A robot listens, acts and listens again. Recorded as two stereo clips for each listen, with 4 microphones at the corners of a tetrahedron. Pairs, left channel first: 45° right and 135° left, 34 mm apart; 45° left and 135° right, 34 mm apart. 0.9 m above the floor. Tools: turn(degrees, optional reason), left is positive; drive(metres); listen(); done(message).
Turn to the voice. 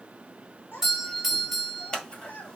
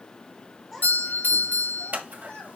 turn(degrees=-20, reason="The child speaking: 20° right.")
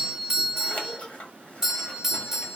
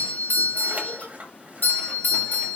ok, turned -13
listen()
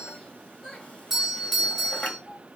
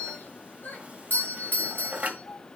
turn(degrees=30, reason="The child speaking is now 30° left.")
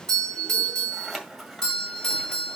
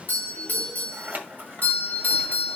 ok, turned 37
listen()
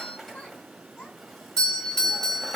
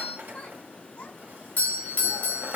done("Found it: a child speaking, straight ahead.")